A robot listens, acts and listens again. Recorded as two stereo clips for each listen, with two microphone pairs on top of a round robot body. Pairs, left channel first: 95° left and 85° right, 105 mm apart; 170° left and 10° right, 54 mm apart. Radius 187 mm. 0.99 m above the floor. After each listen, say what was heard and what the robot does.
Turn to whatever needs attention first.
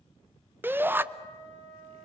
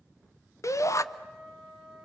The shout: 160° right. Turn 160° right.
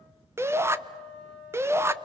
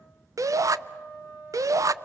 The shout is now 15° right. Turn 15° right.
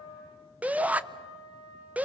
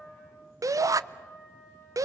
Facing the shout, under 1 m away.